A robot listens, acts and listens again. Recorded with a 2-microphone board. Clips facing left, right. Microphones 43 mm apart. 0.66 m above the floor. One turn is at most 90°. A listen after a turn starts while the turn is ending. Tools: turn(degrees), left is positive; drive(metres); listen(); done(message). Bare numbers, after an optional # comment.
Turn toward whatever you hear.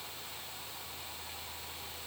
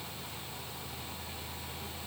listen()
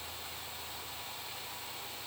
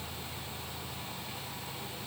listen()
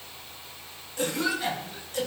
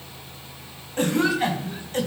# The cough: about 40° right or 140° right.
turn(-40)
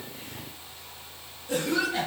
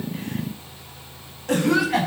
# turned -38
# So it is at 100° right.
turn(-90)
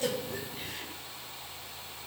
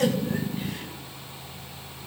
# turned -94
listen()
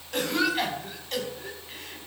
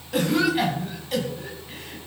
done("Facing the cough.")